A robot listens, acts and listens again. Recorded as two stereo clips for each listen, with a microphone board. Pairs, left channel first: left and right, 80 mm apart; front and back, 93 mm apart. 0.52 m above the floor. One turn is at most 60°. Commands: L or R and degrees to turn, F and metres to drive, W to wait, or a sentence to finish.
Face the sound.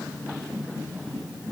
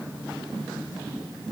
W
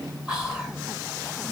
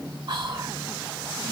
R60
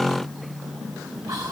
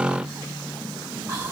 R60
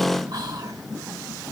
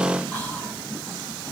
R60
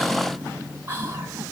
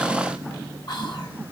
R30
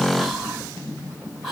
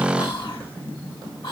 Facing the whispering, 1 to 2 m away.